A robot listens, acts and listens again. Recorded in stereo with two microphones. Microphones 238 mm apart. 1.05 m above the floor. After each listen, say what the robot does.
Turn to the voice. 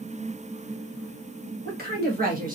Turn 35° right.
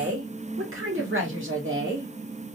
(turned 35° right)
Turn 125° right.
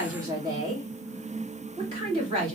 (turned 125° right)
Turn 20° right.
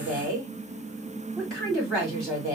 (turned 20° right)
Found it: a woman speaking, straight ahead.